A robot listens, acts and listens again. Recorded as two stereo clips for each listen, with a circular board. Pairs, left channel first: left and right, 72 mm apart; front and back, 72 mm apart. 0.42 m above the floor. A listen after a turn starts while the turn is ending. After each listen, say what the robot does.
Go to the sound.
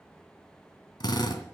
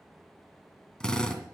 Turn 80° left.
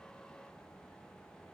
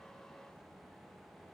Keep listening.
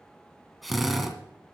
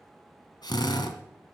Drive 1.0 m forward.
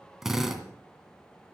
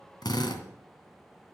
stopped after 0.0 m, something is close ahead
Something is in my way. I am facing the drill but have not reached it.